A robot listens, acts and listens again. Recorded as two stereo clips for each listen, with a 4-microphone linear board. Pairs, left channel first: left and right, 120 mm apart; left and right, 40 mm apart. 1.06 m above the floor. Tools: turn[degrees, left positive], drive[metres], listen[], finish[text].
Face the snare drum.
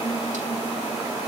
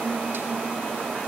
Action: listen[]
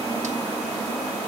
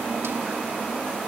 Action: listen[]
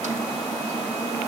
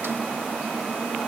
Action: finish[I can't make out a snare drum to turn to.]